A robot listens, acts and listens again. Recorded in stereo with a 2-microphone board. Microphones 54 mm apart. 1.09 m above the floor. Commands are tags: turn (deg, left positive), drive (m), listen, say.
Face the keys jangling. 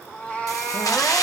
<turn deg="90"/>
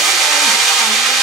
<say>Facing the keys jangling.</say>